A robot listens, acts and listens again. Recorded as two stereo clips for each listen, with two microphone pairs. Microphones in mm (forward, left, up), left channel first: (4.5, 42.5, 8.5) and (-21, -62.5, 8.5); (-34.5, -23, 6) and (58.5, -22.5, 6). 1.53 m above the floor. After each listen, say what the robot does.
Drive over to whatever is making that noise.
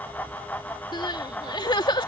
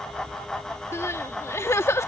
Turn 120° left.
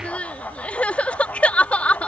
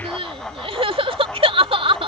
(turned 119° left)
Drive 1.0 m forward.
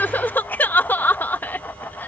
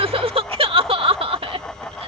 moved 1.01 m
Drive 1.0 m forward.
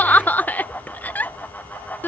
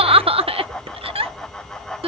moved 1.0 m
Drive 1.0 m forward.
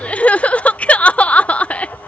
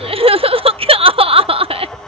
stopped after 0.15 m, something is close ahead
I am next to the crying.